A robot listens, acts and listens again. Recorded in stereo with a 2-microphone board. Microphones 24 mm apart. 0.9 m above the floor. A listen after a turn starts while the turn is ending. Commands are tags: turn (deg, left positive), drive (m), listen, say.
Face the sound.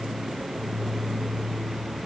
<listen/>
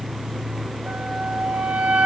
<turn deg="-90"/>
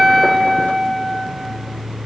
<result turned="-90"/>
<say>Found it: a flute, straight ahead, 2 to 4 m away.</say>